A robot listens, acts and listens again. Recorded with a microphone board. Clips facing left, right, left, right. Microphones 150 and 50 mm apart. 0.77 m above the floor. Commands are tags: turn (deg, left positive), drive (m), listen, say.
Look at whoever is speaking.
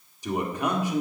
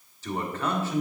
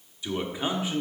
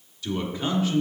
<turn deg="15"/>
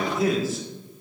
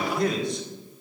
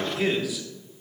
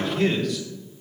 <say>Facing the man speaking.</say>